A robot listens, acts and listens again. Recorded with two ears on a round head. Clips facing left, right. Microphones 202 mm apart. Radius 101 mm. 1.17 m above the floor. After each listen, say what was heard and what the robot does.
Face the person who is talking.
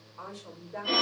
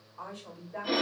The woman speaking: about 55° left or 125° left. Turn 55° left.
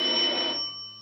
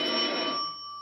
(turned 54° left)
Keep listening.
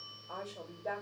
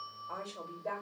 So it is at 10° left. Turn 10° left.
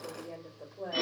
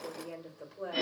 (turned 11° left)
Facing the woman speaking, 1 to 2 m away.